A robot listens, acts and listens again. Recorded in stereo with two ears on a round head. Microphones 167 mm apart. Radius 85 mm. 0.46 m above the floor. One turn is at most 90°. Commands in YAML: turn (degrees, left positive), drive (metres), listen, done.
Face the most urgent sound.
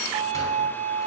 listen: true
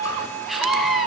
turn: 30
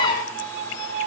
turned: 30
turn: 90
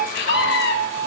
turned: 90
turn: 90
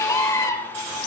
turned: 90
turn: 20
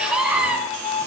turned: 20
done: "Found it: a scream, straight ahead."